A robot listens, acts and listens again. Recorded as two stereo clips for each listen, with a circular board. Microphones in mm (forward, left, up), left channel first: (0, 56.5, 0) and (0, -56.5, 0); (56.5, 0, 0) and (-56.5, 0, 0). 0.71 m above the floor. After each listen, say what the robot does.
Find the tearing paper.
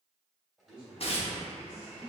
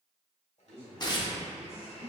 Turn 55° left.
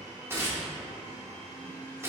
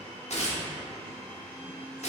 Turn 20° right.
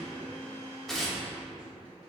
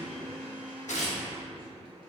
Facing the tearing paper, under 1 m away.